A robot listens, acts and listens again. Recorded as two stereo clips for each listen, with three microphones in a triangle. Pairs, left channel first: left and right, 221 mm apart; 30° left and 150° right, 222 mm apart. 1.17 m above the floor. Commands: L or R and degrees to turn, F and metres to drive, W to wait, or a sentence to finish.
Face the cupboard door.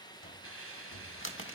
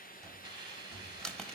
L115
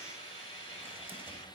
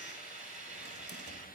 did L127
R10
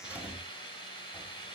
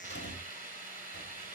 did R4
Found it: a cupboard door, straight ahead.